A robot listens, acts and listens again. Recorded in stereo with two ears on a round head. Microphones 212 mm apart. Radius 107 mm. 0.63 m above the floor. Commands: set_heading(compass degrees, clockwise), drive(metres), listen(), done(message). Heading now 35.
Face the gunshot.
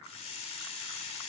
listen()
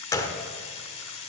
set_heading(20)
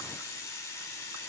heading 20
listen()
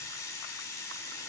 done("I heard a gunshot, but can't make it out now. It was about straight ahead or 150° left.")